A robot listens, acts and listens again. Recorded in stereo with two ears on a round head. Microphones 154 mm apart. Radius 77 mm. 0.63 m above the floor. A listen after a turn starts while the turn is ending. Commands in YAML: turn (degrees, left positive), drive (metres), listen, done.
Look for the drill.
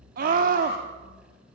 listen: true
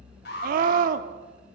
listen: true
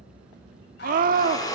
turn: 20
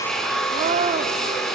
done: "Facing the drill."